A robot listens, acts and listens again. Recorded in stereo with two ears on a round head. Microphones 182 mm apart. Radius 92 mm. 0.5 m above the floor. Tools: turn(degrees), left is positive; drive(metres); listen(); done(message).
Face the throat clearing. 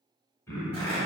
turn(degrees=30)
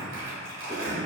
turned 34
listen()
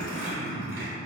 turn(degrees=135)
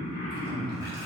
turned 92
turn(degrees=40)
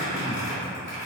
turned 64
turn(degrees=-20)
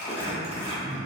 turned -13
turn(degrees=-10)
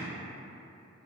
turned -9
listen()
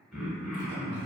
done("Found it: throat clearing, straight ahead.")